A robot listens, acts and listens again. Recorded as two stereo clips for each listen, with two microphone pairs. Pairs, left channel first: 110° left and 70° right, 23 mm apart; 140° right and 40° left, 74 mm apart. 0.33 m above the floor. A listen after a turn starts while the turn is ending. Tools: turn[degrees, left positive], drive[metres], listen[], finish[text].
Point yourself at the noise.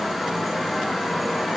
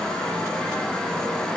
Action: listen[]
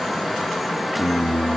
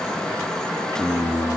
Action: finish[Facing the singing, 2 to 4 m away.]